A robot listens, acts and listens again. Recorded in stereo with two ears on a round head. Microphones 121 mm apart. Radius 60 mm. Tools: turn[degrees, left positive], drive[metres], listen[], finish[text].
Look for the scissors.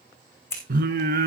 Thought: The scissors: about 20° left or 160° left.
Action: turn[20]
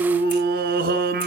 Action: listen[]
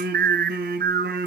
Action: listen[]
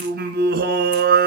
Action: finish[I heard scissors, but can't make it out now. It was about straight ahead or 140° left.]